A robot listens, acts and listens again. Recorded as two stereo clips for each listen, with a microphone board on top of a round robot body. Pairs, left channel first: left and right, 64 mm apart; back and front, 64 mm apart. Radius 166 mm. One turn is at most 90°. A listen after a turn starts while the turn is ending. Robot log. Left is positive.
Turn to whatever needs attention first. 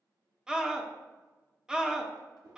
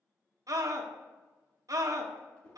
note: The scream: 10° right.
cmd yaw -10
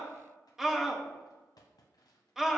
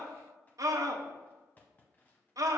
end: Facing the scream.